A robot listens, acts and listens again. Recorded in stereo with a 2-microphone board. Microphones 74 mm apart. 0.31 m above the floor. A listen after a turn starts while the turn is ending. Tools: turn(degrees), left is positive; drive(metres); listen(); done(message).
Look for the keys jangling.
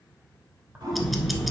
turn(degrees=-15)
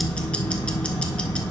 listen()
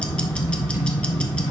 listen()
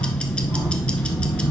done("I heard keys jangling, but can't make it out now. It was about straight ahead or 150° right.")